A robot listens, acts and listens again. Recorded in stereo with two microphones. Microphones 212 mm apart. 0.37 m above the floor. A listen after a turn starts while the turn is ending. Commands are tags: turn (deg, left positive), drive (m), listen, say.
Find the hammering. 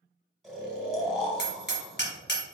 <turn deg="55"/>
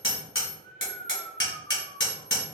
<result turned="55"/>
<turn deg="70"/>
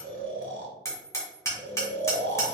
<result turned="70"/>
<turn deg="15"/>
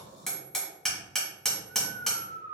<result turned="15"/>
<say>Found it: hammering, straight ahead.</say>